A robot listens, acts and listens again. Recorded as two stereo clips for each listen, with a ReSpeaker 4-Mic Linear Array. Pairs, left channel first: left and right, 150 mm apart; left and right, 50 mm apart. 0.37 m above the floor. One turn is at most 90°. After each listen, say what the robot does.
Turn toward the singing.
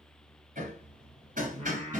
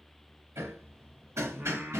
Turn 50° right.
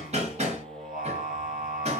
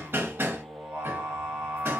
Turn 80° right.
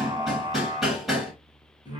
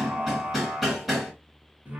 Turn 30° right.
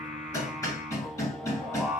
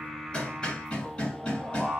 Turn 10° right.
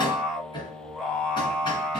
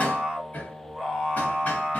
Found it: singing, straight ahead.